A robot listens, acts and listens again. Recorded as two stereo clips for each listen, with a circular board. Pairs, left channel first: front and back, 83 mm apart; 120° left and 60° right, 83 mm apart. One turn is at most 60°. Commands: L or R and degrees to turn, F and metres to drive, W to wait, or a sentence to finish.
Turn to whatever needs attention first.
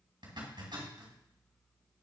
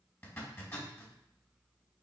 W
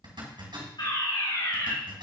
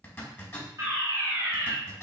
Facing the fire alarm, 2 to 4 m away.